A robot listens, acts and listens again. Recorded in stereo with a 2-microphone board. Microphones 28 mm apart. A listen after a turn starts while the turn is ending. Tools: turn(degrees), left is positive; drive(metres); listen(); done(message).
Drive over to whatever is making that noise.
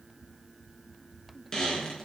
turn(degrees=25)
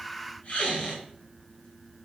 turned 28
turn(degrees=130)
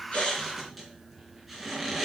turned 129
drive(metres=1.0)
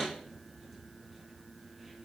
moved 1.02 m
drive(metres=1.0)
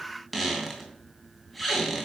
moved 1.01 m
drive(metres=1.0)
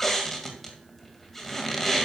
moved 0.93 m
turn(degrees=10)
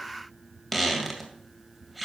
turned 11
drive(metres=1.0)
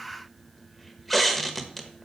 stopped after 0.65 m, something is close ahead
done("I am next to the squeak.")